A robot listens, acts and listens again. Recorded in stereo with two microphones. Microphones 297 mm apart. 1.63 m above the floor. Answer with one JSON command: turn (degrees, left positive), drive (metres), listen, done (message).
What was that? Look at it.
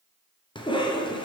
{"turn": 15}
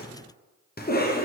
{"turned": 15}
{"turn": 150}
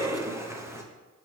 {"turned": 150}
{"turn": -10}
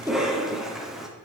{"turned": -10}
{"done": "Found it: a cough, straight ahead."}